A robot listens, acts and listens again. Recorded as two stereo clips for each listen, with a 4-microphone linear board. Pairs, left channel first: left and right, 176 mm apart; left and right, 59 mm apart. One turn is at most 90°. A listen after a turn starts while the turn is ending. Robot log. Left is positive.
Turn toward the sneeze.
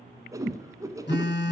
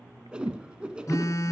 cmd idle
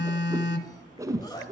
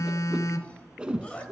note: The sneeze: about 20° left or 160° left.
cmd yaw +20
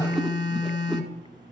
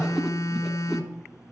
cmd idle
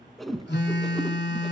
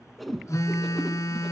end: I heard a sneeze, but can't make it out now. It was about straight ahead or 140° left.